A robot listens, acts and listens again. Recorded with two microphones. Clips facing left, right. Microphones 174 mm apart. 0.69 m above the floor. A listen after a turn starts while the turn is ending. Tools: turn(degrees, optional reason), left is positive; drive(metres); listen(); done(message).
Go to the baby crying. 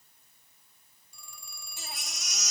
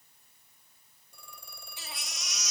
turn(degrees=50, reason="The baby crying: about 50° left or 130° left.")
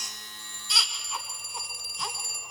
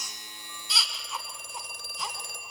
drive(metres=1.0)
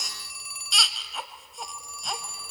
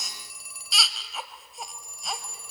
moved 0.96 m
drive(metres=1.0)
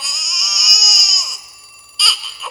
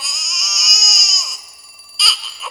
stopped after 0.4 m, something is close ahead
done("Arrived at the baby crying, straight ahead.")